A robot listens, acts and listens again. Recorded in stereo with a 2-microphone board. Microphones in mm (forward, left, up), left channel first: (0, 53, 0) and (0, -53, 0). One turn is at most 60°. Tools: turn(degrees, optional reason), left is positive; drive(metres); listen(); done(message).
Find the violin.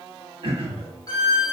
turn(degrees=40, reason="The violin: about 40° left or 140° left.")
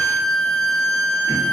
turn(degrees=60, reason="So it is at 100° left.")
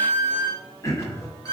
turn(degrees=35, reason="The violin is now 35° left.")
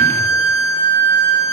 turn(degrees=25, reason="The violin is now 25° left.")
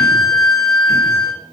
done("Facing the violin, under 1 m away.")